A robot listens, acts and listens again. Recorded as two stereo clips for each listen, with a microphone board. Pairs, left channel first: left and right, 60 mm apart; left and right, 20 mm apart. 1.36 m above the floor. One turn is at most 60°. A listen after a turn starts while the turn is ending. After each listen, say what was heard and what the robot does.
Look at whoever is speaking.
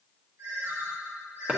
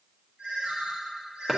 Keep listening.
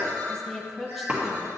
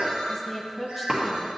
Turn 30° left.
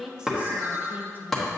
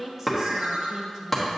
So it is at 30° right. Turn 30° right.
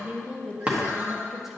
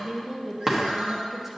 Facing the woman speaking, under 1 m away.